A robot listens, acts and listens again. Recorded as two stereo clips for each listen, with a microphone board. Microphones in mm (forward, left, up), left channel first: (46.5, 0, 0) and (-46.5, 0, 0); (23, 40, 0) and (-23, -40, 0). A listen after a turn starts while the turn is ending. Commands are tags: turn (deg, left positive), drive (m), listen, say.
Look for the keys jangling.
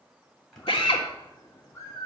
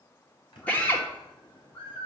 <turn deg="90"/>
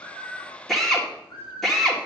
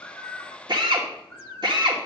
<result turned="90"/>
<listen/>
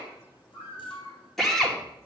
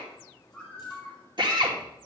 <listen/>
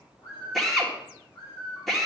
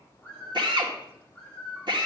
<say>Facing where the keys jangling came from. I can't hear it now.</say>